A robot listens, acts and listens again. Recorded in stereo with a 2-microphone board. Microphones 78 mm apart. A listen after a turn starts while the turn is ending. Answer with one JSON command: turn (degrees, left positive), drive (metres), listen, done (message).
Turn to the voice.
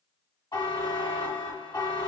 {"listen": true}
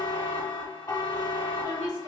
{"turn": -60}
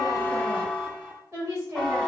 {"turn": -40}
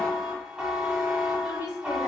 {"turn": -20}
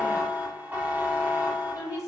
{"done": "Found it: a woman speaking, straight ahead, 1 to 2 m away."}